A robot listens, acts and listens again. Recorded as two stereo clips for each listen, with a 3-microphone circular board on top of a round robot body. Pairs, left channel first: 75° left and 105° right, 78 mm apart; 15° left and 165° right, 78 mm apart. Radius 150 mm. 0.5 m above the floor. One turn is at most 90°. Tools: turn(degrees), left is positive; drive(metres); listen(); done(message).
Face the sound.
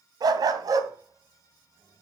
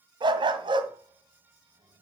turn(degrees=-90)
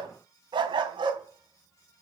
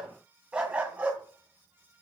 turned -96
turn(degrees=-90)
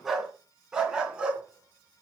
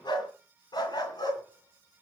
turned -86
turn(degrees=-25)
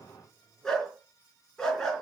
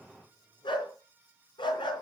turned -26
done("Facing the dog barking.")